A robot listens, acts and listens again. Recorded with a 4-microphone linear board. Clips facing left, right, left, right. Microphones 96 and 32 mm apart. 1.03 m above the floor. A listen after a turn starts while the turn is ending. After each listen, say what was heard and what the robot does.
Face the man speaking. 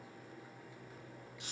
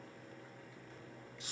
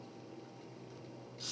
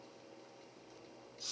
Keep listening.
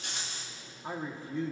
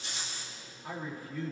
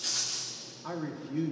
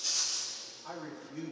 The man speaking: about 25° left or 155° left. Turn 25° left.
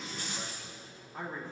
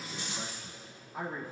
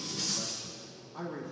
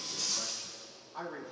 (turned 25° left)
So it is at 10° right. Turn 10° right.
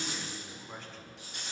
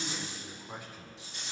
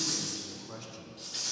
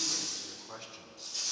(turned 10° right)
The man speaking is now 10° right. Turn 10° right.
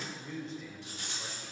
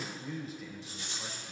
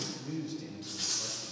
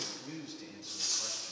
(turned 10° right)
Facing the man speaking, 2 to 4 m away.